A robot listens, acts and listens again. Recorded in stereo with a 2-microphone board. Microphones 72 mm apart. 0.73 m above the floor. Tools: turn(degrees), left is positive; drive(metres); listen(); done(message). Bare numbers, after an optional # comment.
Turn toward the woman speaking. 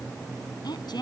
turn(90)
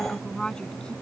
# So it is at 10° left.
turn(10)
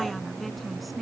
done("Facing the woman speaking.")